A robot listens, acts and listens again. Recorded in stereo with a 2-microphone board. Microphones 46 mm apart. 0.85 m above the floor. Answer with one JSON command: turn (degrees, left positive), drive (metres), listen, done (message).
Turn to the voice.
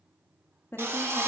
{"turn": 55}
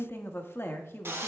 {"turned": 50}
{"turn": 60}
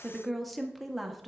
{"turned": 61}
{"done": "Found it: a woman speaking, straight ahead."}